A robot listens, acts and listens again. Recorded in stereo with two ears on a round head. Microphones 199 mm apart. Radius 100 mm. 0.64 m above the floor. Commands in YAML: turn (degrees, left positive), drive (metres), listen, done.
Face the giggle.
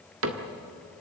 listen: true
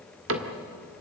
listen: true
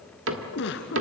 turn: 55
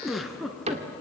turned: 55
done: "Found it: a giggle, straight ahead, 1 to 2 m away."